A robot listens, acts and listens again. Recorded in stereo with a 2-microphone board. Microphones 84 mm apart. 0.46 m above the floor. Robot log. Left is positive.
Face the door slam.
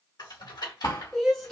note: The door slam: about 50° left or 130° left.
cmd yaw +50
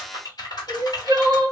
cmd idle
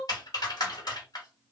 end: I heard a door slam, but can't make it out now. It was about straight ahead or 80° left.